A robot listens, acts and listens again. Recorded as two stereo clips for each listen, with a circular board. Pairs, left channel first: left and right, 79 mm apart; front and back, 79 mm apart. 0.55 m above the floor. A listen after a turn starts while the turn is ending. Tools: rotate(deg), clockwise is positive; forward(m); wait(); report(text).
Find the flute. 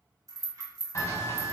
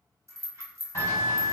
rotate(-145)
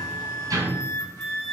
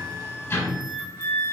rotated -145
rotate(-40)
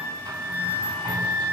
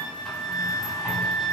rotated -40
report("Found it: a flute, straight ahead.")